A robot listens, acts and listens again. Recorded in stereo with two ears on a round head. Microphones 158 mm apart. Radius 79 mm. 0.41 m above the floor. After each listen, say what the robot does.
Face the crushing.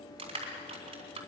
Turn 30° right.
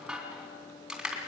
Facing the crushing, 2 to 4 m away.